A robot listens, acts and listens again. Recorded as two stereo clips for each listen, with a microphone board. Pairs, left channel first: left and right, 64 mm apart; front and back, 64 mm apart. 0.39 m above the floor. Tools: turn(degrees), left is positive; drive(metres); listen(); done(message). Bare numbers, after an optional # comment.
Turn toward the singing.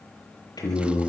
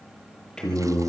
# The singing: 80° left.
turn(80)
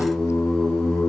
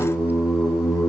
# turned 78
# The singing is now 10° left.
turn(10)
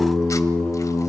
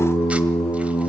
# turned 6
done("Facing the singing.")